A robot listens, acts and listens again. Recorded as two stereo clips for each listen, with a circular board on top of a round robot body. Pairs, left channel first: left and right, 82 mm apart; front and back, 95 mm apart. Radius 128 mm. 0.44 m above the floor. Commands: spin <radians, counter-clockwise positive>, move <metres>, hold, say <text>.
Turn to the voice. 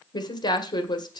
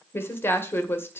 spin 1.13
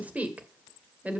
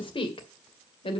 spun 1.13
spin -0.35
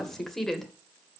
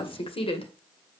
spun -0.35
say Found it: a woman speaking, straight ahead, 2 to 4 m away.